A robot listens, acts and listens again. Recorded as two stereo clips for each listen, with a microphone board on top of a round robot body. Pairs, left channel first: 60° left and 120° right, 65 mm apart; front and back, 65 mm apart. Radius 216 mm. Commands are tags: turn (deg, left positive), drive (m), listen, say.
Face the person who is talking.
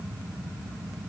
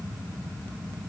<listen/>
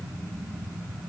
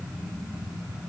<listen/>
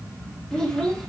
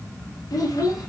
<turn deg="-25"/>
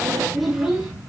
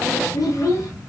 <turn deg="-40"/>
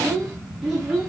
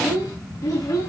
<turn deg="-35"/>
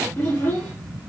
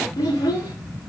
<say>Found it: a child speaking, straight ahead, 1 to 2 m away.</say>